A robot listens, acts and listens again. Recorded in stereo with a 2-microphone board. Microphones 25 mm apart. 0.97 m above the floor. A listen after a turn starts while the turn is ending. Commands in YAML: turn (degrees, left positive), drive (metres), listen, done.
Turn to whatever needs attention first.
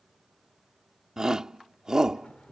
turn: -30
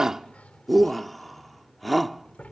done: "Facing the shout."